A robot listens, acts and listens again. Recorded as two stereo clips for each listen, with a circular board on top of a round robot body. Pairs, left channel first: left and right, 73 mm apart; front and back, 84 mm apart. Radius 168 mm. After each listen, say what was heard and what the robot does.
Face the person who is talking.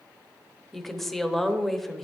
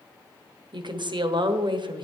The woman speaking: 175° left. Turn 175° left.
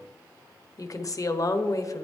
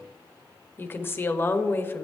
The woman speaking is now 60° left. Turn 60° left.
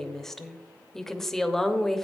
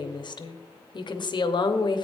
Facing the woman speaking.